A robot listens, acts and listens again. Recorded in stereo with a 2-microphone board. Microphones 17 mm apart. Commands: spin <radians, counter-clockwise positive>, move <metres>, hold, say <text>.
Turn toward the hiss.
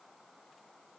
hold
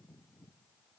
hold
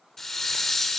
spin 0.52
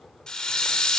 spin 2.27
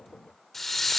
spin 0.35
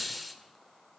say Facing the hiss, 1 to 2 m away.